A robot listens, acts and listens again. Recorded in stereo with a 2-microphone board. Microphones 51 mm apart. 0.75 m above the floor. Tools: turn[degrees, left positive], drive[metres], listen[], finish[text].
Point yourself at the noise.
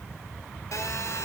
Action: turn[90]
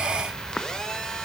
Thought: So it is at 15° left.
Action: turn[15]
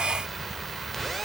Action: finish[Facing the phone buzzing, 1 to 2 m away.]